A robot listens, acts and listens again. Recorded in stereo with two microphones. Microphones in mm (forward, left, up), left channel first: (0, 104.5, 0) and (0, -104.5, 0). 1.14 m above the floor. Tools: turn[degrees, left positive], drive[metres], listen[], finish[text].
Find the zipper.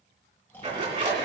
Thought: The zipper: about 35° right or 145° right.
Action: turn[-35]
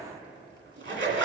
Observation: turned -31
Thought: So it is at 110° right.
Action: turn[-110]
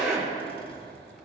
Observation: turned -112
Action: finish[Found it: a zipper, straight ahead, 2 to 4 m away.]